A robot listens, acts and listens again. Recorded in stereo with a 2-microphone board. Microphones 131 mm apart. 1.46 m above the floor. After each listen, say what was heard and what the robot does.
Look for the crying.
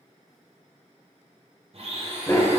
Keep listening.
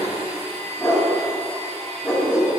Keep listening.
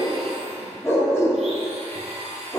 I can't make out crying, only a dog barking and a blender.